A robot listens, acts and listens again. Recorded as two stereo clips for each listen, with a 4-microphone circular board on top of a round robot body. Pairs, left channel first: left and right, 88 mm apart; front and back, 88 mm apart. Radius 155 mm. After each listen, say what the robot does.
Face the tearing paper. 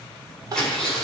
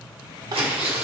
Turn 170° left.
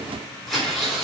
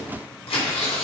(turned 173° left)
Facing the tearing paper.